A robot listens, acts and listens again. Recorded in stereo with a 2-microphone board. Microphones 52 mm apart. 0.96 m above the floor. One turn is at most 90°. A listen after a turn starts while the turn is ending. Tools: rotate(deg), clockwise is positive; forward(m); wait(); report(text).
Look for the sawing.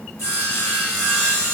rotate(-90)
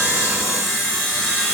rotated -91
report("Found it: sawing, straight ahead.")